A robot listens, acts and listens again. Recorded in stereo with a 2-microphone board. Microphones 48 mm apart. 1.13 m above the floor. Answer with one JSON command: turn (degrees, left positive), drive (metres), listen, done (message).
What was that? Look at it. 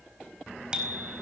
{"turn": -20}
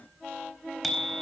{"done": "Facing the bicycle bell, over 4 m away."}